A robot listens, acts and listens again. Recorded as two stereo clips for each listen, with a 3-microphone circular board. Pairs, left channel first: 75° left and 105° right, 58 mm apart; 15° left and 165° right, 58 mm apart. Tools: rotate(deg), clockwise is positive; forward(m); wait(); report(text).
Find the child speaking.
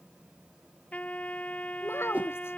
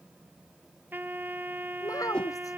rotate(-30)
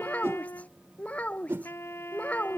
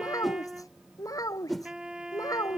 rotate(-10)
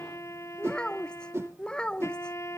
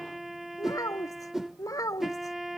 report("Facing the child speaking.")